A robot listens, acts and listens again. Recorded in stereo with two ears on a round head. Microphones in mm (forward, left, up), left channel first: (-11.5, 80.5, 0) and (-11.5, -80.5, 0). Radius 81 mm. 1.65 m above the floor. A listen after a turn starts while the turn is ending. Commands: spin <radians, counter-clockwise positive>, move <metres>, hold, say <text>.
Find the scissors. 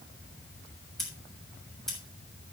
spin 0.52
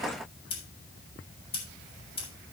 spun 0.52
spin 2.53
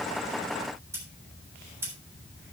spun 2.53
spin -0.26
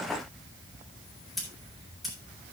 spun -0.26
say Facing the scissors, over 4 m away.